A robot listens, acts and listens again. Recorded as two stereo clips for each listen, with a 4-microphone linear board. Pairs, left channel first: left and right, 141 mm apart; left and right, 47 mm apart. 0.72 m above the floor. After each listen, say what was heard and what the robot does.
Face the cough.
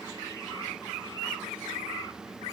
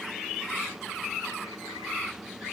Keep listening.
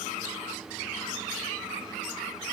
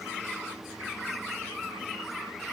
Keep listening.
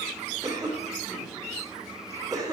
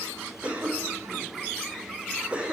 The cough: about 25° right or 155° right. Turn 25° right.
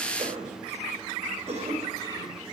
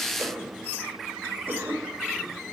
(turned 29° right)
So it is at 130° right. Turn 130° right.
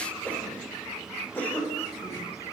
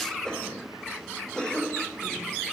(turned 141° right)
The cough is now 10° left. Turn 10° left.
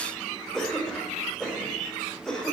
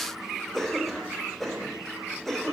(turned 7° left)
Found it: a cough, straight ahead, 2 to 4 m away.